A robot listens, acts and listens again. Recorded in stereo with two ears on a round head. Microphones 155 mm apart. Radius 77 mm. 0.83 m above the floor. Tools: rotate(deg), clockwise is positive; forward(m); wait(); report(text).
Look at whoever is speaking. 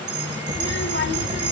rotate(-65)
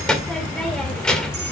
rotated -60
report("Found it: a child speaking, straight ahead, 2 to 4 m away.")